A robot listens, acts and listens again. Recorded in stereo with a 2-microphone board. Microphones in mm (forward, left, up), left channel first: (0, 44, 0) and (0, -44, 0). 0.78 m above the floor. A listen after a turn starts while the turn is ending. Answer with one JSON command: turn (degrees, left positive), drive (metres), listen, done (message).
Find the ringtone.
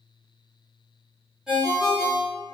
{"turn": -30}
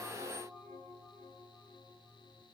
{"listen": true}
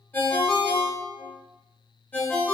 {"turn": 25}
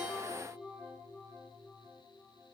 {"listen": true}
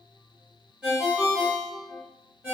{"turn": -15}
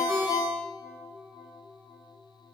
{"done": "Facing the ringtone, 1 to 2 m away."}